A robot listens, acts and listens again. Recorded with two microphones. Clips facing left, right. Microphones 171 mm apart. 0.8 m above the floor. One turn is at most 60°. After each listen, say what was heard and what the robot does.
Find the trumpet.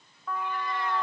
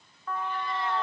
Turn 30° left.
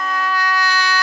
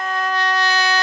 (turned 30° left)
So it is at 20° right. Turn 20° right.
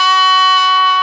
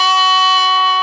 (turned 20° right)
Found it: a trumpet, straight ahead, 1 to 2 m away.